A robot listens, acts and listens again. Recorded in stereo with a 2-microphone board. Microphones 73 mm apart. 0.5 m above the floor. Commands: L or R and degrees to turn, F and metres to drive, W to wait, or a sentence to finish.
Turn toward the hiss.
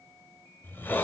L30
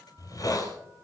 L120
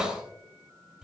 R10
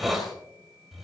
Found it: a hiss, straight ahead, 2 to 4 m away.